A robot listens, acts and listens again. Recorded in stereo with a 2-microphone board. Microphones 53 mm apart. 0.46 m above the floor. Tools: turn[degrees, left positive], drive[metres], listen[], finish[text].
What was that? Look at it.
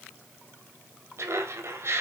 Thought: The laughter: about 55° right or 125° right.
Action: turn[-55]
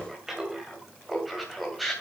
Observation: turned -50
Action: finish[Facing the laughter.]